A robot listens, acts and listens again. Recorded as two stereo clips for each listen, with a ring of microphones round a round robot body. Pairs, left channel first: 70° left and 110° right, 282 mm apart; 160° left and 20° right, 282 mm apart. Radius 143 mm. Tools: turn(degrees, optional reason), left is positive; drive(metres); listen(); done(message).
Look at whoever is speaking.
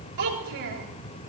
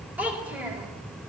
turn(degrees=-105, reason="The child speaking: 105° right.")
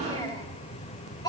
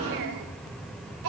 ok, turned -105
turn(degrees=-10, reason="The child speaking is now 10° right.")
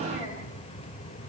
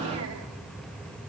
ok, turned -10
listen()
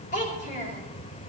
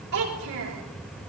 done("Facing the child speaking.")